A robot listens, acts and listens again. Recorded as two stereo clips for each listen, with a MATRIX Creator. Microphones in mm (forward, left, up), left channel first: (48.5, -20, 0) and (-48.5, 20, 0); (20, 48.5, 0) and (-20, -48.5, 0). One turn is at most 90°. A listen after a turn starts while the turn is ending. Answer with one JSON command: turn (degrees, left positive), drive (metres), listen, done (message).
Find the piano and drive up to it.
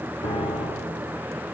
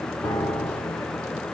{"drive": 1.0}
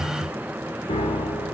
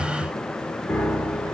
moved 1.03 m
{"turn": -10}
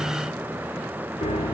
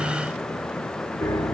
{"drive": 1.0}
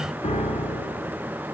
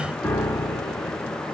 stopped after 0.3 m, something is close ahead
{"done": "I am next to the piano."}